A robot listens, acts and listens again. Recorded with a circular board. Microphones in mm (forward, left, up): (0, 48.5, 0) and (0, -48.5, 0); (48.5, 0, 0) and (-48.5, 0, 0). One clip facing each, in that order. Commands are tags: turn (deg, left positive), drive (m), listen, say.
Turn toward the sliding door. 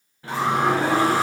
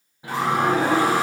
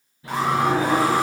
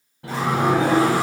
<turn deg="-165"/>
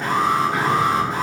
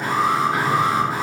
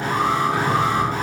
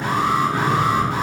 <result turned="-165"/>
<say>Found it: a sliding door, straight ahead, under 1 m away.</say>